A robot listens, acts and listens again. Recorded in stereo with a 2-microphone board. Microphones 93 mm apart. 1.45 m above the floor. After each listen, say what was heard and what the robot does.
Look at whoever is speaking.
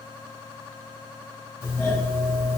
Keep listening.
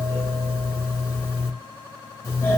Keep listening.
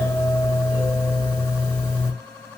I can't make out anyone speaking to turn to.